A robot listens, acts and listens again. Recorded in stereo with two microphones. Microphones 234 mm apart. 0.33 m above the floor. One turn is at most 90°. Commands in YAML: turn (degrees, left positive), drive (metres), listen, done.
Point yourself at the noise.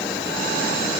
listen: true
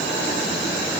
listen: true
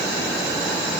done: "I can't make out anything to turn to."